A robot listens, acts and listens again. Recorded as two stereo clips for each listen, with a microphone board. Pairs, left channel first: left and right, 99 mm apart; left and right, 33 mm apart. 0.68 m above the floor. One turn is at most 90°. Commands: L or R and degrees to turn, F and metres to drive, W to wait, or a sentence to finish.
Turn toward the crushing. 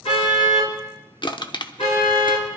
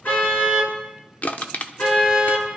L55
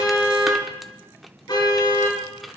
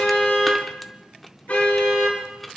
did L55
W
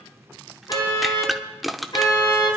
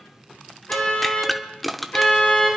Found it: crushing, straight ahead.